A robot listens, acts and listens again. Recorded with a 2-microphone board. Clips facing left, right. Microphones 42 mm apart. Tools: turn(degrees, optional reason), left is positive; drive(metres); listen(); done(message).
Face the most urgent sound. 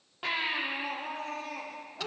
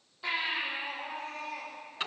turn(degrees=65, reason="The baby crying: about 65° left or 115° left.")
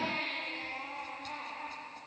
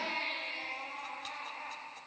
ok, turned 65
turn(degrees=55, reason="So it is at 55° left.")
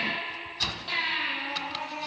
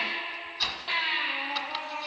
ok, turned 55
turn(degrees=-15, reason="The baby crying is now 15° right.")
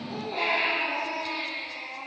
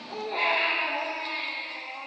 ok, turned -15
done("Facing the baby crying.")